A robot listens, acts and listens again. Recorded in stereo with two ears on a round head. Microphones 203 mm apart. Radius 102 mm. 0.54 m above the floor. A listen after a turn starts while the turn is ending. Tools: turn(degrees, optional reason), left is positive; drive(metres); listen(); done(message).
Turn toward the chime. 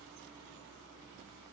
listen()
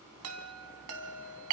turn(degrees=-75, reason="The chime: about 75° right or 105° right.")
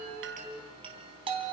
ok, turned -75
turn(degrees=-25, reason="So it is at 25° right.")
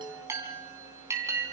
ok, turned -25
turn(degrees=-15, reason="The chime is now 15° right.")
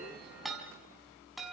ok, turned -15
done("Found it: a chime, straight ahead, 2 to 4 m away.")